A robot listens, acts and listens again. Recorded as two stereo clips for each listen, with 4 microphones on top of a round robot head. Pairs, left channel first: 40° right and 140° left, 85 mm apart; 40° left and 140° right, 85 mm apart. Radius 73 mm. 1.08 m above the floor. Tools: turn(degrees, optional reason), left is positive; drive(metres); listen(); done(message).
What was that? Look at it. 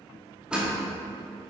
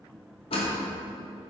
turn(degrees=60, reason="The door slam: 60° left.")
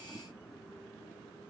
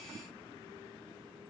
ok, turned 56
done("I heard a door slam from this way, but can't make it out now.")